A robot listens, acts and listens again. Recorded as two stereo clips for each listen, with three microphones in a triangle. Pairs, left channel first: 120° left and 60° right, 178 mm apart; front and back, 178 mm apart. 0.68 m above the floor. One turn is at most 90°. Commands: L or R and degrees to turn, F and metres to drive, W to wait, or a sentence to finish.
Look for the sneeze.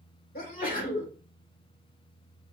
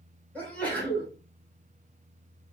L80
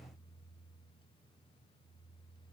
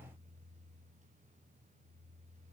I heard a sneeze from this way, but can't make it out now.